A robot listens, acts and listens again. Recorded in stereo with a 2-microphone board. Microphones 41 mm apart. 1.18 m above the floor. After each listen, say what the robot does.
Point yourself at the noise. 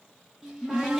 Turn 30° right.
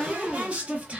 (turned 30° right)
Turn 140° right.
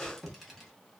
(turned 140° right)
Found it: a cupboard door, straight ahead, 1 to 2 m away.